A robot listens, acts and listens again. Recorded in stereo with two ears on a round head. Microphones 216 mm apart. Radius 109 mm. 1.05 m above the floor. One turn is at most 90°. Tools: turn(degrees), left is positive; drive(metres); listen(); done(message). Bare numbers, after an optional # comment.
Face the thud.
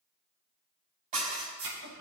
turn(-90)
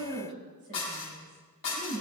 done("I heard a thud from this way, but can't make it out now.")